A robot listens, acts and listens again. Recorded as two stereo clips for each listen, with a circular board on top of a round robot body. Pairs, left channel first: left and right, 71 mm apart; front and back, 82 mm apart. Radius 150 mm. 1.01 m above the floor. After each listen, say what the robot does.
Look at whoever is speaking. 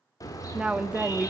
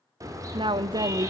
Turn 165° right.
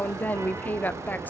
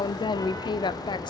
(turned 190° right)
Turn 25° left.
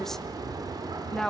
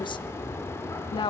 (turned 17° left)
Facing the woman speaking.